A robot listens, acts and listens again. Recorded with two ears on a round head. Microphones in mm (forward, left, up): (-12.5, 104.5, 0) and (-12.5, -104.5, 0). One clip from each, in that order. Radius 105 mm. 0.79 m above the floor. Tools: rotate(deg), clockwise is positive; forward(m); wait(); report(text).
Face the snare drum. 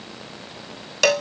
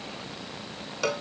wait()
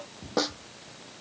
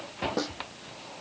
rotate(-30)
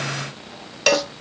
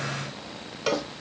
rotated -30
wait()
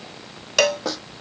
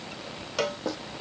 rotate(-120)
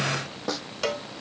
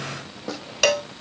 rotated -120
rotate(-20)
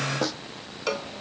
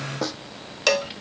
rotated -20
report("Facing the snare drum.")